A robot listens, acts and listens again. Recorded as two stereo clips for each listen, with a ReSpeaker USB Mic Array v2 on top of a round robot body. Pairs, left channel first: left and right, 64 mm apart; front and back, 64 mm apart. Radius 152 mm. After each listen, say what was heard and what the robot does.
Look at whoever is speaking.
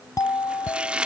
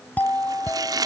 Keep listening.
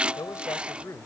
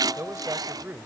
The man speaking: 125° left. Turn 125° left.
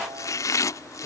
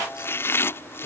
Keep listening.
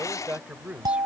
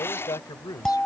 The man speaking is now 20° right. Turn 20° right.
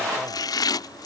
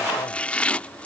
Keep listening.
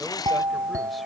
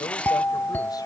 Keep listening.
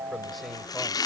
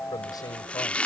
I heard a man speaking from this way, but can't make it out now.